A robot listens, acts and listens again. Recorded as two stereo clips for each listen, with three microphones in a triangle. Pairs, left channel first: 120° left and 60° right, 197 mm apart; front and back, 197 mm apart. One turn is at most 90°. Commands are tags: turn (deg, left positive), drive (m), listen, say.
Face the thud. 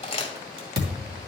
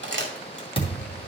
<turn deg="-60"/>
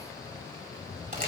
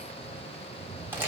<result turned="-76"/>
<turn deg="20"/>
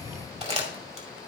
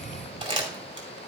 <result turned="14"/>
<say>Facing where the thud came from. I can't hear it now.</say>